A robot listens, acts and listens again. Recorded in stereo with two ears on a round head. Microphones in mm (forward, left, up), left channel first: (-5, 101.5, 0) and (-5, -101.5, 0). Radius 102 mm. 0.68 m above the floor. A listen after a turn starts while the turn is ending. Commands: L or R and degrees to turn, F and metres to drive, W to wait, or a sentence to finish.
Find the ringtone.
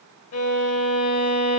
W
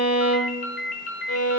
L45
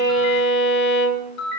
L90
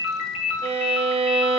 L10
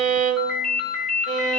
Facing the ringtone, 1 to 2 m away.